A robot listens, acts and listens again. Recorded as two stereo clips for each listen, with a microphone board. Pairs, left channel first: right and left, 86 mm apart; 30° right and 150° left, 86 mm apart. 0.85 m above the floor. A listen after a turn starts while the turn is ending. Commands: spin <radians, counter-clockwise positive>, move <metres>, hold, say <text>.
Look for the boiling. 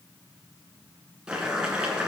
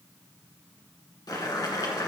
spin 0.17
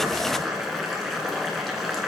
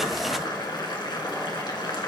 say Found it: boiling, straight ahead.